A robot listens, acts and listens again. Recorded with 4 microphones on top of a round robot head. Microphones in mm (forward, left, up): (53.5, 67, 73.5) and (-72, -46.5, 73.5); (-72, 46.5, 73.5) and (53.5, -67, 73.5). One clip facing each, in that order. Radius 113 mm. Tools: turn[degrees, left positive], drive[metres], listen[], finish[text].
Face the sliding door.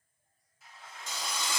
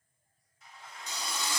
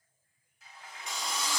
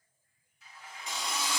Thought: The sliding door: 130° left.
Action: turn[130]
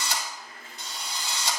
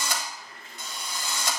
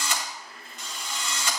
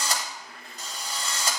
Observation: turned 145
Thought: The sliding door is now 15° right.
Action: turn[-15]
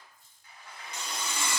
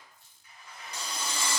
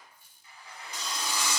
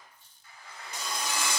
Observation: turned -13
Action: finish[Found it: a sliding door, straight ahead.]